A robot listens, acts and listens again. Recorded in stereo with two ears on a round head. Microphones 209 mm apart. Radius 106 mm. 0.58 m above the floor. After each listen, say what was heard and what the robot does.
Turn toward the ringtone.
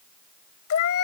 Keep listening.
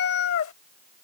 Keep listening.
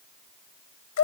I can't make out a ringtone, only a cat meowing.